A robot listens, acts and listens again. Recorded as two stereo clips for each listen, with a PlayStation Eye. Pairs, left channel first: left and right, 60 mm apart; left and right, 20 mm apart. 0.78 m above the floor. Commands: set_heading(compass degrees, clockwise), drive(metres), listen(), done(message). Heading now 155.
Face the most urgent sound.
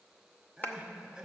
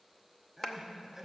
set_heading(185)
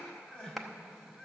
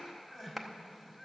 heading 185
set_heading(170)
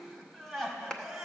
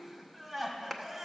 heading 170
done("Facing the crying.")